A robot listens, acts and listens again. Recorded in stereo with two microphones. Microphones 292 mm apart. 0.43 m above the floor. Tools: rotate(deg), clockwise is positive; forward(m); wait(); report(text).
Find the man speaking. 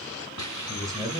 rotate(30)
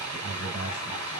rotate(145)
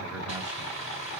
wait()
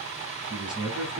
rotate(15)
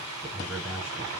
report("Facing the man speaking.")